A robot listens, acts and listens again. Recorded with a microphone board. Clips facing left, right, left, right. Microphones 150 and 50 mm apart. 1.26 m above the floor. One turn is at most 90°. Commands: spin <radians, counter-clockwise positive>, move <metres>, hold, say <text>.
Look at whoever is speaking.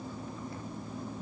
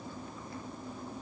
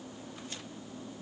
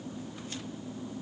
hold
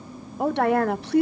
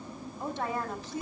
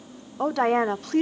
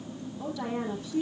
spin 1.22
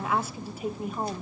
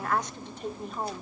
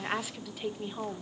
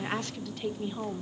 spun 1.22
say Found it: a woman speaking, straight ahead.